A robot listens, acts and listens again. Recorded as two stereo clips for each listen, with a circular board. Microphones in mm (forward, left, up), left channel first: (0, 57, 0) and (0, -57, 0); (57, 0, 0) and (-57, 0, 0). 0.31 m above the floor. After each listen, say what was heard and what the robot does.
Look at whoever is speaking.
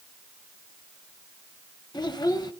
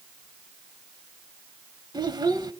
The child speaking: 135° left. Turn 135° left.
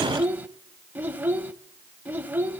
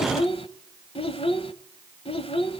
The child speaking is now 20° right. Turn 20° right.
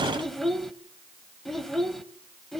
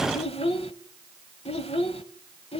Facing the child speaking, under 1 m away.